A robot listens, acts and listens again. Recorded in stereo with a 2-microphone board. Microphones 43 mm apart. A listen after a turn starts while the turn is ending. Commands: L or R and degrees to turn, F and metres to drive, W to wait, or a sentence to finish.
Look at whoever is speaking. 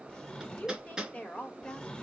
L30
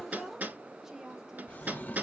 R15
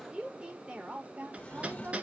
R30
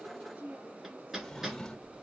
R35
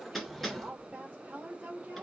R30
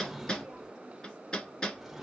W
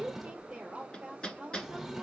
R20
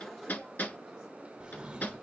W
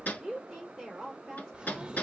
Facing the woman speaking.